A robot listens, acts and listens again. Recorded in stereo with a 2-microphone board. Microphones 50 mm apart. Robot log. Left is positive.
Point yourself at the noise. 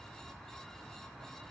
cmd idle
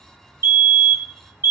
note: The fire alarm: about 55° right or 125° right.
cmd yaw -55
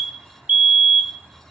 note: So it is at 35° right.
cmd yaw -35
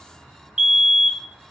note: The fire alarm is now 15° right.
cmd yaw -15
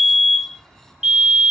end: Found it: a fire alarm, straight ahead.